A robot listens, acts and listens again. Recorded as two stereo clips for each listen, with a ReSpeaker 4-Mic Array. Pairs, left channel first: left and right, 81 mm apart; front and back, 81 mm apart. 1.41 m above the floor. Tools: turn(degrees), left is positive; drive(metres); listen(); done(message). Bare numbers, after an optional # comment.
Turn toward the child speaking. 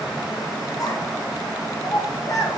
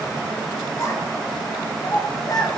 # The child speaking: 40° left.
turn(40)
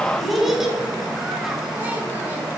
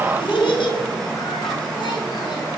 done("Found it: a child speaking, straight ahead, 1 to 2 m away.")